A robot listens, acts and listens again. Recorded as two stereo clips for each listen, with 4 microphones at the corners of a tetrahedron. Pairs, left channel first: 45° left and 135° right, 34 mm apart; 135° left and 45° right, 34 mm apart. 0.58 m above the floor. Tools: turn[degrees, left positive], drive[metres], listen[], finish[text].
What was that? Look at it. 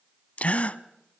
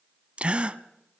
Action: finish[Found it: a gasp, straight ahead.]